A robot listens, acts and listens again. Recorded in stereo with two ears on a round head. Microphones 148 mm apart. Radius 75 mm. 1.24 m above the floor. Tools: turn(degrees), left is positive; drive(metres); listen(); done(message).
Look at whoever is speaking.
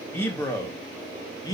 turn(degrees=20)
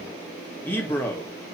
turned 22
turn(degrees=15)
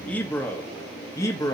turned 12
turn(degrees=20)
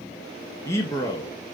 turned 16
turn(degrees=20)
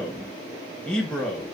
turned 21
done("Facing the man speaking.")